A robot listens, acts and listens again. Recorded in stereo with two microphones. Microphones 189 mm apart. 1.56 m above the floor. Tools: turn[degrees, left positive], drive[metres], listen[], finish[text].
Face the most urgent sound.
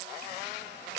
Action: listen[]
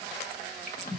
Action: listen[]
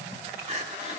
Thought: The crying: about 35° right or 145° right.
Action: turn[-35]
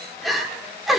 Action: finish[Found it: crying, straight ahead.]